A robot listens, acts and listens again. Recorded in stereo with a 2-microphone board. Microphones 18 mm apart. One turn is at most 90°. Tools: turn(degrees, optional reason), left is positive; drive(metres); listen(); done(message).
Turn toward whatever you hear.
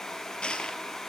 turn(degrees=70, reason="The crushing: about 70° left or 110° left.")
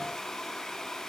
listen()
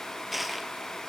done("Facing the crushing, 2 to 4 m away.")